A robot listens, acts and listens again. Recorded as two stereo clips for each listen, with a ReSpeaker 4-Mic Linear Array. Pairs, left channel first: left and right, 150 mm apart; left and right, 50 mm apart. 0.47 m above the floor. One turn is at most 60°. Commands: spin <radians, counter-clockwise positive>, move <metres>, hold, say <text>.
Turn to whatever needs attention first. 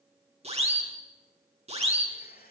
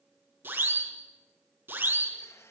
spin -0.79
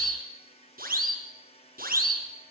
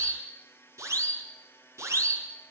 spin -1.05
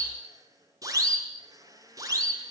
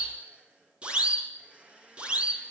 spin -0.44
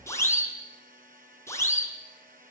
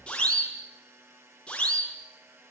spin 0.35
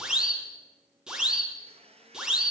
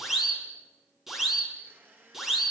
say Found it: a siren, straight ahead, over 4 m away.